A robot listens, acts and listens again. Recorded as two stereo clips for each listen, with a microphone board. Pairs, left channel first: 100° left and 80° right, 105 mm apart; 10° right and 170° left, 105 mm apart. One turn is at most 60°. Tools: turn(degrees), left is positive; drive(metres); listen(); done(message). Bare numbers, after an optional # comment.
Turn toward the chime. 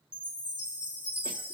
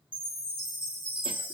# The chime: 160° right.
turn(-60)
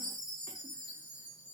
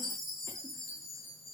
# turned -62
# The chime is now 100° right.
turn(-60)
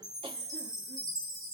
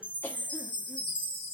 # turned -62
# The chime is now 35° right.
turn(-35)
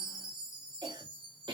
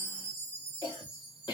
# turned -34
done("Found it: a chime, straight ahead, 2 to 4 m away.")